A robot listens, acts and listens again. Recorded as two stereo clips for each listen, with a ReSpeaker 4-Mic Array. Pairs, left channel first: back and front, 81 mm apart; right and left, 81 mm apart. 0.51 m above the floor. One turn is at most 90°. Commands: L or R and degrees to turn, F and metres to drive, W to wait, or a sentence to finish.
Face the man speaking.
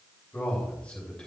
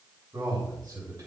L90
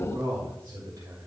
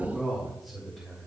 R10
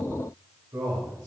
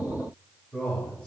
R15
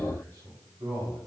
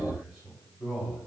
R10
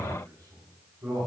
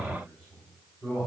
R10
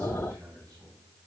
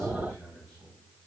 Facing the man speaking, 2 to 4 m away.